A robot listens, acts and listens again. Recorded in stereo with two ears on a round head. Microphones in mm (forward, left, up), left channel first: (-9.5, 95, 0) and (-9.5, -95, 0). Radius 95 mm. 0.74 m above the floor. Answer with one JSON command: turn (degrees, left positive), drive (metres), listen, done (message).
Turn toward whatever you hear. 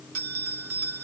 {"turn": -70}
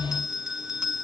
{"done": "Found it: a bell, straight ahead."}